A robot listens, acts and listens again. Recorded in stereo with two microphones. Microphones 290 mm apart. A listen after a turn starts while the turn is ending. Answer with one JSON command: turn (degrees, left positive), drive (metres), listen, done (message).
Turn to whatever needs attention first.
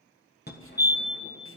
{"turn": 35}
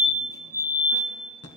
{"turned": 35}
{"turn": 110}
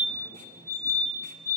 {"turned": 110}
{"turn": 10}
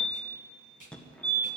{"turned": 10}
{"done": "Found it: a fire alarm, straight ahead."}